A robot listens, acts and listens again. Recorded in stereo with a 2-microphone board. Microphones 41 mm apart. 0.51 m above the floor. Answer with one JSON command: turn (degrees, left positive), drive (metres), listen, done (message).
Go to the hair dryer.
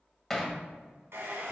{"turn": -90}
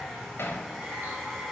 {"drive": 1.0}
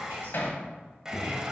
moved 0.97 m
{"turn": -15}
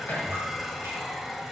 {"drive": 1.0}
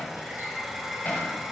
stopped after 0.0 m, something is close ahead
{"done": "Arrived at the hair dryer, straight ahead."}